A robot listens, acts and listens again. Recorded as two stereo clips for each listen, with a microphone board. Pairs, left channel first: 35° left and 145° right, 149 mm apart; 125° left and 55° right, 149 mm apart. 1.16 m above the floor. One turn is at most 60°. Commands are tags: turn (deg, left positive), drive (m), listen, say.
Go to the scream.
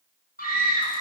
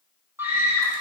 <turn deg="20"/>
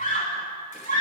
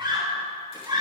<drive m="1.0"/>
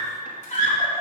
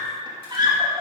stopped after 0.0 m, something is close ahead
<say>Something is in my way. I am facing the scream but have not reached it.</say>